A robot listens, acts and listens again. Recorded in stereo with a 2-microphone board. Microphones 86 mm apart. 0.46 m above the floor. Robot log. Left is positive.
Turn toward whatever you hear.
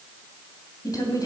note: The woman speaking: about 50° left or 130° left.
cmd yaw +50
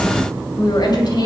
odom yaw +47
note: So it is at 60° left.
cmd yaw +60
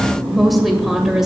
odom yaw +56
end: Facing the woman speaking.